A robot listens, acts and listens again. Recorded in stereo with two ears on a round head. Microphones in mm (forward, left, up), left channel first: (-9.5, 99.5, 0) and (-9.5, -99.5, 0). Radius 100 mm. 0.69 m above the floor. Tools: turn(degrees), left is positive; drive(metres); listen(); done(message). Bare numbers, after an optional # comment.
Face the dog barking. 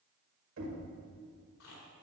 listen()
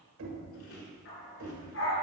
# The dog barking: about 60° left or 120° left.
turn(60)
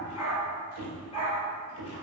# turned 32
# So it is at 25° left.
turn(25)
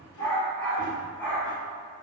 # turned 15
# The dog barking is now 10° left.
turn(10)
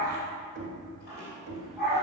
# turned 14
done("Found it: a dog barking, straight ahead.")